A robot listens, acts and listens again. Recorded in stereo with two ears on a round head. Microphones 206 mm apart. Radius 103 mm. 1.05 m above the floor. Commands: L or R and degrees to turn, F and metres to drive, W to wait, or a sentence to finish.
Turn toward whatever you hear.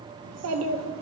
R60
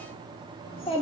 L25
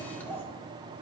L10
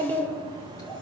L20
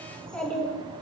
L10
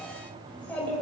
Found it: a child speaking, straight ahead, 2 to 4 m away.